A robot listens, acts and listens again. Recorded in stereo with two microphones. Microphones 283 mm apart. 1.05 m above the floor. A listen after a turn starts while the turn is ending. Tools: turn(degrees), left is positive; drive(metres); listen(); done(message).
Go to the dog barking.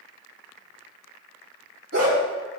turn(degrees=-55)
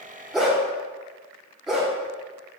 drive(metres=1.0)
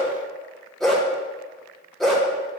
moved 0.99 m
drive(metres=1.0)
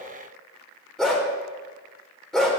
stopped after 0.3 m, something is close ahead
done("Arrived at the dog barking, straight ahead.")